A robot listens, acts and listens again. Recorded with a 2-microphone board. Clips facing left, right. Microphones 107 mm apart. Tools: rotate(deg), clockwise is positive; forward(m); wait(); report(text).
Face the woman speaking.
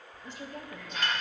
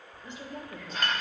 rotate(25)
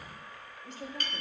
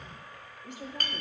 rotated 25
rotate(20)
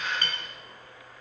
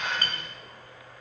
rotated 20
wait()
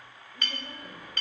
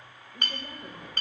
rotate(25)
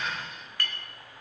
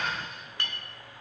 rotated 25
wait()
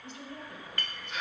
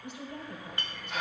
rotate(15)
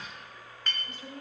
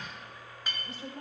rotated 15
report("Found it: a woman speaking, straight ahead.")